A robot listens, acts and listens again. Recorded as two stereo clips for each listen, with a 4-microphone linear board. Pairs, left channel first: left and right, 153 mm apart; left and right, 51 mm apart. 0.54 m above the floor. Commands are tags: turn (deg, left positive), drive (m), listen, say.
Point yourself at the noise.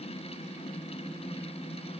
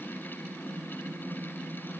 <listen/>
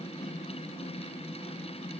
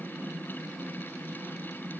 <listen/>
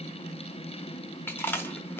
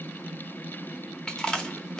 <turn deg="30"/>
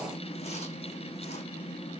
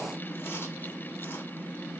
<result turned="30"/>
<listen/>
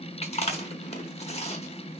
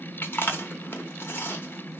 <turn deg="130"/>
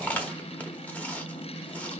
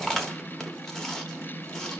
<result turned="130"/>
<turn deg="10"/>
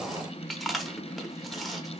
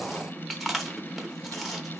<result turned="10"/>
<say>Facing the chewing, under 1 m away.</say>